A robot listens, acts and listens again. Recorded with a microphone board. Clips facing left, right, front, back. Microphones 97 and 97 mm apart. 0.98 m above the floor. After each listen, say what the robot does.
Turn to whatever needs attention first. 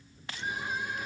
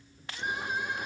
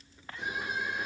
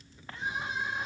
Turn 115° right.
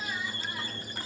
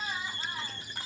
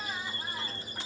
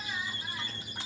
Turn 35° right.
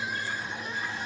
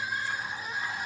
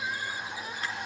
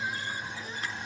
Turn 10° right.
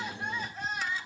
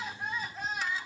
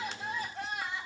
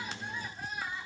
Found it: crying, straight ahead, over 4 m away.